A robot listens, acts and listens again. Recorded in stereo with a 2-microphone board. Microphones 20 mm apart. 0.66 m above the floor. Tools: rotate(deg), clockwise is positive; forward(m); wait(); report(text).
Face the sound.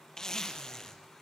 rotate(-30)
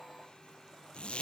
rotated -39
rotate(-110)
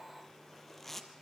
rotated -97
rotate(-15)
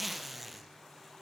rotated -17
report("Facing the zipper, 2 to 4 m away.")